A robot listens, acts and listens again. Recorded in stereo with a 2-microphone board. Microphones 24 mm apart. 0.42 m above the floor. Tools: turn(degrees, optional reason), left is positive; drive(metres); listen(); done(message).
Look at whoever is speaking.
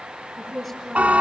turn(degrees=-30)
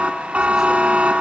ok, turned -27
listen()
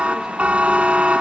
listen()
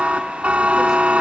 done("I heard a woman speaking, but can't make it out now. It was about 25° left or 150° right.")